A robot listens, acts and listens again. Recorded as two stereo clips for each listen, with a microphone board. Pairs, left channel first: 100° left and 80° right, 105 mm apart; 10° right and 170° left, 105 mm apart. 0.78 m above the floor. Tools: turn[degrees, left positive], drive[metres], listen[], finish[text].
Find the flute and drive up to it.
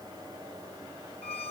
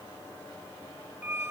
Action: listen[]
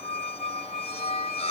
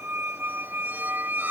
Action: listen[]
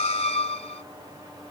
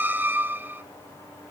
Action: finish[I can't make out a flute, only a squeak.]